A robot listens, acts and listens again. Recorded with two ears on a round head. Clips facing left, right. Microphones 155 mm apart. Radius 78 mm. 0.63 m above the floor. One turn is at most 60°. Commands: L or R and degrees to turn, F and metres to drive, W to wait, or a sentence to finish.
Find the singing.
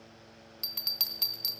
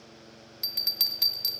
W
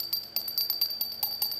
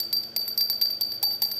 W
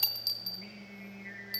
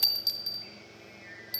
L45
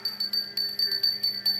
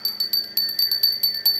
W
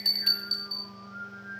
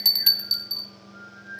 L60
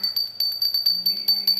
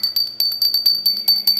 L35
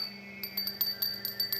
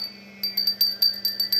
Facing the singing, 2 to 4 m away.